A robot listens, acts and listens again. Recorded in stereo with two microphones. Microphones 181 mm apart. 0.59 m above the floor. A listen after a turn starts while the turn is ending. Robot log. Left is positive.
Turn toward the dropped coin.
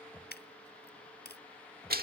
note: The dropped coin: about 60° left or 120° left.
cmd yaw +60
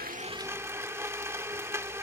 cmd idle
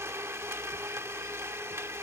end: I heard a dropped coin, but can't make it out now. It was about straight ahead or 60° left.